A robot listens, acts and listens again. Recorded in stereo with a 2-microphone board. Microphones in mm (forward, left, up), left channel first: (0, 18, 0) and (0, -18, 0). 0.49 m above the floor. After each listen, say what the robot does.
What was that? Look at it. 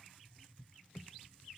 Keep listening.
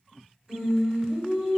Turn 20° right.
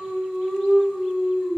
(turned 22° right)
Turn 135° right.
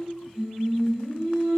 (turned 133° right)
Facing the singing, 1 to 2 m away.